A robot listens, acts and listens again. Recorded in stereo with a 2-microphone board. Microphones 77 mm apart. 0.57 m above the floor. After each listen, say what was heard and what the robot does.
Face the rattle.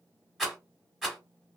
Turn 30° left.
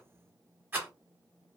So it is at 25° right. Turn 25° right.
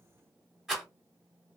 Facing the rattle, 1 to 2 m away.